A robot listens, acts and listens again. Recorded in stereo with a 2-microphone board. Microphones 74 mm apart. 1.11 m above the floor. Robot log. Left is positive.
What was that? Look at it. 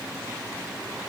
cmd idle
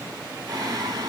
note: The singing: about 60° right or 120° right.
cmd yaw -60
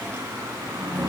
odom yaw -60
note: So it is at 35° right.
cmd yaw -35
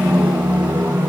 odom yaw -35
note: The singing is now 25° right.
cmd yaw -25
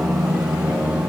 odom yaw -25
note: The singing is now 10° right.
cmd yaw -10
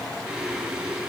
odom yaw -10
end: Found it: singing, straight ahead, 2 to 4 m away.